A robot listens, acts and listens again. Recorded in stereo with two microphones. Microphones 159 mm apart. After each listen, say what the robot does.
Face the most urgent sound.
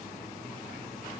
Keep listening.
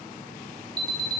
Turn 25° right.
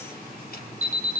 Turn 125° right.
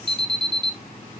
Turn 30° right.
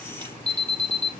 Found it: an alarm, straight ahead.